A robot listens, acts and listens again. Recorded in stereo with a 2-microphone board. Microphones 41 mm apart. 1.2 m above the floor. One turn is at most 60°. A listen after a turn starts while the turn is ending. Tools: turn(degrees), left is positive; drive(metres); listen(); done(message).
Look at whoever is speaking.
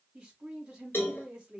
turn(degrees=-20)
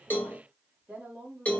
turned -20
turn(degrees=-60)
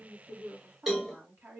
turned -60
turn(degrees=-60)
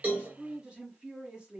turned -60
turn(degrees=-25)
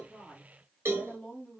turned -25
turn(degrees=10)
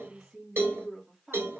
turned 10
done("Found it: a woman speaking, straight ahead, 1 to 2 m away.")